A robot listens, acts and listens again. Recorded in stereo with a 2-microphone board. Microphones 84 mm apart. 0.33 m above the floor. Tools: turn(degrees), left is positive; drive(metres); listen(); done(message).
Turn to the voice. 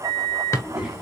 turn(degrees=-30)
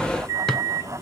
listen()
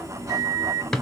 listen()
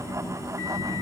turn(degrees=-140)
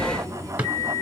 turn(degrees=30)
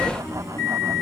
turn(degrees=-15)
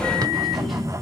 done("Found it: a child speaking, straight ahead, 2 to 4 m away.")